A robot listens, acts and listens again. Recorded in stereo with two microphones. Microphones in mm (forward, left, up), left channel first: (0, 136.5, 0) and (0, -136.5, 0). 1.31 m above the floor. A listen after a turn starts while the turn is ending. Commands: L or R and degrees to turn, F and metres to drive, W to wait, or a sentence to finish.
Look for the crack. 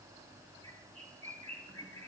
W
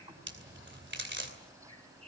R45
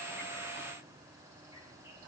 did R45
W
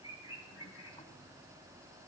I heard a crack, but can't make it out now. It was about straight ahead or 90° right.